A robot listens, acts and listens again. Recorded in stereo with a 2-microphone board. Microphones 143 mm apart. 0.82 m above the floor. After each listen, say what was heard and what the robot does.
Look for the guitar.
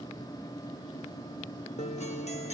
The guitar: about 50° left or 130° left. Turn 50° left.
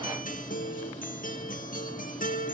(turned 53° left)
So it is at 75° left. Turn 75° left.
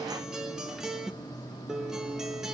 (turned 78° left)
Facing the guitar.